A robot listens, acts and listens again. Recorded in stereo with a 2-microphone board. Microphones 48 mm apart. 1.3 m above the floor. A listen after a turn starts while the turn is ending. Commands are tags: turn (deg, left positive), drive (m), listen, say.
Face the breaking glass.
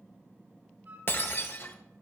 <turn deg="50"/>
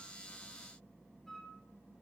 <listen/>
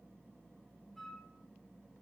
<say>I heard breaking glass, but can't make it out now. It was about straight ahead or 80° left.</say>